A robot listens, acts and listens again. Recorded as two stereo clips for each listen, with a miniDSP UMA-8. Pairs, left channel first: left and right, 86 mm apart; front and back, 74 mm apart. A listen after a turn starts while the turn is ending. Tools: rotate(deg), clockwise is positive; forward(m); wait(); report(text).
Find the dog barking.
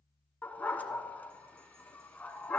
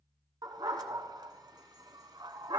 rotate(-160)
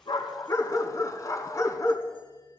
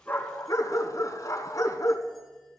rotate(-40)
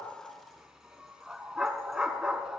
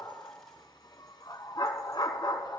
rotate(10)
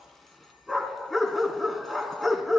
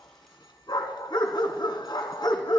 report("Facing the dog barking, 1 to 2 m away.")